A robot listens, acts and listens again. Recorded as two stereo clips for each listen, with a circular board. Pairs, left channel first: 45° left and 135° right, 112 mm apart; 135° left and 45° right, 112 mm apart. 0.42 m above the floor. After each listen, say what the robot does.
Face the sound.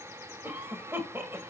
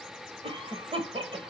Turn 70° right.
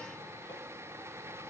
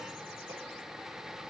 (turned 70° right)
Keep listening.
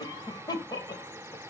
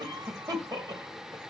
Found it: a cough, straight ahead, 1 to 2 m away.